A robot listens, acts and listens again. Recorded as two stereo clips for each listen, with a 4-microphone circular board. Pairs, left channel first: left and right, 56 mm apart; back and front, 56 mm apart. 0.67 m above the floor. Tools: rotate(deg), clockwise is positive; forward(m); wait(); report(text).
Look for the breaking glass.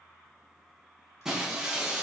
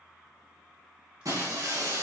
rotate(10)
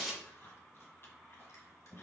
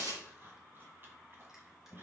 report("Facing the breaking glass, 2 to 4 m away.")